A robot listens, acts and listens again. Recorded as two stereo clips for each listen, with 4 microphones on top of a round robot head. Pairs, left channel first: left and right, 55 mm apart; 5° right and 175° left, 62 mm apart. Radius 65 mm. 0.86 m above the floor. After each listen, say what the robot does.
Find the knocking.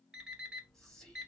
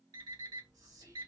Keep listening.
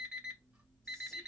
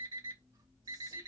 Keep listening.
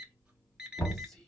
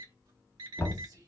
Turn 45° left.
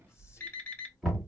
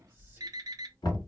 Found it: knocking, straight ahead, 2 to 4 m away.